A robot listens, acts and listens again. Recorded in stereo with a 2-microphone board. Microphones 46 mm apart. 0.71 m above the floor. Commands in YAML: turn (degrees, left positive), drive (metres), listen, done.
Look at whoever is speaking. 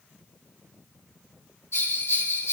listen: true
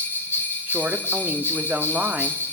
turn: -45
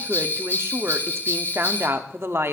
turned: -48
turn: -80
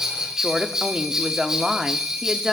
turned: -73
turn: -10
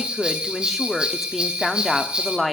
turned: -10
done: "Found it: a woman speaking, straight ahead, 1 to 2 m away."